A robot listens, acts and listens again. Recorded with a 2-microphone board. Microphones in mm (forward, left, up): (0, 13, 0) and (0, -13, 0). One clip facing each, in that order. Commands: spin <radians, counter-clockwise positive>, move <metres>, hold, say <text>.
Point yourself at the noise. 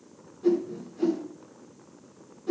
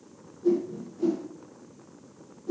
spin 1.57
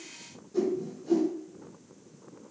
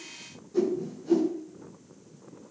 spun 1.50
say Facing the whoosh, over 4 m away.